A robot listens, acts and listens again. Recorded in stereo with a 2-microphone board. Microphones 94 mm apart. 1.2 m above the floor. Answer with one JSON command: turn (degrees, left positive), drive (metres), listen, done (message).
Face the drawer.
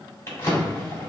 {"turn": 35}
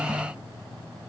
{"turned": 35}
{"listen": true}
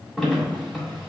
{"done": "Found it: a drawer, straight ahead."}